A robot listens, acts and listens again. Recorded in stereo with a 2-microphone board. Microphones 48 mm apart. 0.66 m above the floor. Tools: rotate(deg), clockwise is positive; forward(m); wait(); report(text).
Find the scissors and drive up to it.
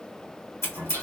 rotate(-90)
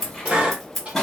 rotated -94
forward(1.0)
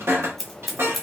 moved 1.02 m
forward(1.0)
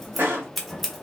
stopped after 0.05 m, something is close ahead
report("Arrived at the scissors, straight ahead.")